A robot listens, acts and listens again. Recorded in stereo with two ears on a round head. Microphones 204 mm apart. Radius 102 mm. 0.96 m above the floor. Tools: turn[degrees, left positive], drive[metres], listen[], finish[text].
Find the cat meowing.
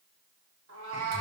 Thought: The cat meowing: about 60° right or 120° right.
Action: turn[-60]
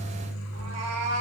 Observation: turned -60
Thought: So it is at 75° right.
Action: turn[-75]
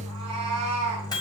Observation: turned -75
Thought: The cat meowing is now 30° right.
Action: turn[-30]
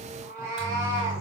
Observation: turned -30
Thought: The cat meowing is now 15° right.
Action: turn[-15]
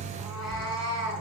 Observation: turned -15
Action: finish[Found it: a cat meowing, straight ahead, 2 to 4 m away.]